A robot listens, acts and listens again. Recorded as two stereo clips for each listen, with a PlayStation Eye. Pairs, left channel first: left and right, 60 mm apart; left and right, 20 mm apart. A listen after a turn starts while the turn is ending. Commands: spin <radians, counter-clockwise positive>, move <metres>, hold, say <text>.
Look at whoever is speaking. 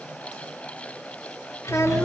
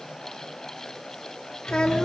spin 0.87
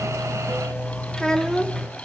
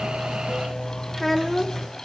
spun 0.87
spin 0.17
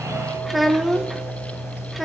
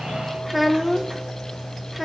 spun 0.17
say Found it: a child speaking, straight ahead, 1 to 2 m away.